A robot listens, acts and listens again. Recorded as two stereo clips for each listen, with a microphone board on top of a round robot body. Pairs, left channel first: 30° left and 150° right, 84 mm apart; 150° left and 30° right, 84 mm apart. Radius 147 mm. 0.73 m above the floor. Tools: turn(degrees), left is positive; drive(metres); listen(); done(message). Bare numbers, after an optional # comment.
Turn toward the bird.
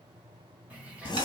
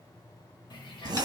# The bird: 135° left.
turn(135)
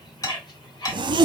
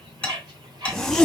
done("Found it: a bird, straight ahead.")